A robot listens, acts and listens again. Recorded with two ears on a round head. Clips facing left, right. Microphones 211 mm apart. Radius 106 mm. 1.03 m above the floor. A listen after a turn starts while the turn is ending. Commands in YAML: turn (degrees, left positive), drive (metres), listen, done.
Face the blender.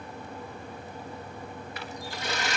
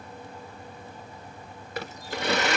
turn: -50
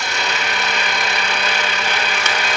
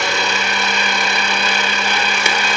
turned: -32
turn: -100
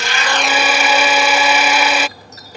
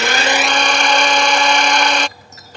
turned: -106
done: "Found it: a blender, straight ahead."